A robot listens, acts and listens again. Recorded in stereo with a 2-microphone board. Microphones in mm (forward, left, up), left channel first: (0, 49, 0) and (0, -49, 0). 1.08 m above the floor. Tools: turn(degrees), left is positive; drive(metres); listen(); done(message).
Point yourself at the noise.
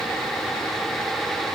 listen()
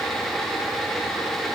listen()
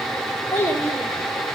turn(degrees=20)
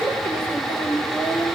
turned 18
turn(degrees=15)
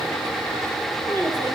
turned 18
listen()
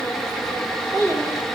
turn(degrees=25)
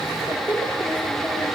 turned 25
turn(degrees=130)
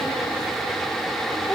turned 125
turn(degrees=10)
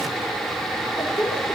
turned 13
done("Found it: a child speaking, straight ahead, 2 to 4 m away.")